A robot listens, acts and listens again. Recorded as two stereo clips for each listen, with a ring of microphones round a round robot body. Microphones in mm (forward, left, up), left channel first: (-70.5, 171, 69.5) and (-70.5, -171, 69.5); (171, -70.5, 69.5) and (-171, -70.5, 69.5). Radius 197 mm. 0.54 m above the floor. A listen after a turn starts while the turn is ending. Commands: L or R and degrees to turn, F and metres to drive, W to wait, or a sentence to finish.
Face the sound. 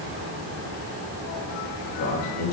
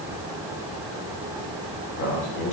L40
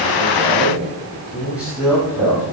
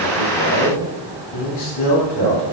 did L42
Facing the man speaking, over 4 m away.